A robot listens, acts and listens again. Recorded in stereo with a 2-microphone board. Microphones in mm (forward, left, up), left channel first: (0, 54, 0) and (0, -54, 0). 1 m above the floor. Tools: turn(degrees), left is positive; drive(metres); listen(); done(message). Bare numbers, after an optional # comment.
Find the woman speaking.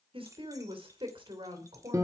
# The woman speaking: about 55° right or 125° right.
turn(-55)
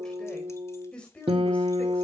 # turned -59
# So it is at 10° left.
turn(10)
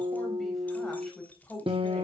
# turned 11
done("Found it: a woman speaking, straight ahead, over 4 m away.")